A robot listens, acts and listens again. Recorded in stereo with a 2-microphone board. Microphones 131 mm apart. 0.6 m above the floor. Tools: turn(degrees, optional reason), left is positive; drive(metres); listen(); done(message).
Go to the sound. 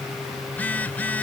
turn(degrees=30)
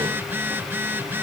turn(degrees=-15, reason="So it is at 15° right.")
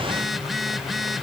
drive(metres=1.0)
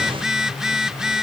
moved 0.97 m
drive(metres=1.0)
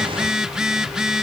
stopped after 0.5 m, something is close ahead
done("Arrived at the phone buzzing, straight ahead.")